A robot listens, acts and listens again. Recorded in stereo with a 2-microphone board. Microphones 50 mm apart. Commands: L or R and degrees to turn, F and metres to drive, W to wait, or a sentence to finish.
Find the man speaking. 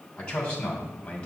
L20
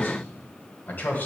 L35
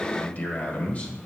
L35
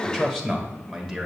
Found it: a man speaking, straight ahead.